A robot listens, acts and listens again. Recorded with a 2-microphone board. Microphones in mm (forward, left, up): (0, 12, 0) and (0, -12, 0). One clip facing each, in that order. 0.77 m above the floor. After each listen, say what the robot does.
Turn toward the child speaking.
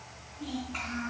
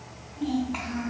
Turn 45° right.
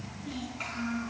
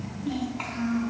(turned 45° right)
Turn 90° right.
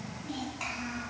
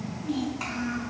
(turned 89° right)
Found it: a child speaking, straight ahead.